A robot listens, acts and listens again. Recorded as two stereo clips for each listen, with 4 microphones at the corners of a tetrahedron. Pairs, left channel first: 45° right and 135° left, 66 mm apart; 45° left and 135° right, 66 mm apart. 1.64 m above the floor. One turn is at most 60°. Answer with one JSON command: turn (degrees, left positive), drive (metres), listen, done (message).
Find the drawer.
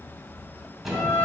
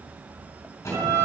{"turn": 50}
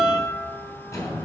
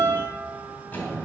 {"turn": -15}
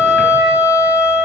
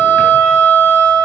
{"listen": true}
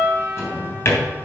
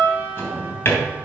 {"done": "Found it: a drawer, straight ahead."}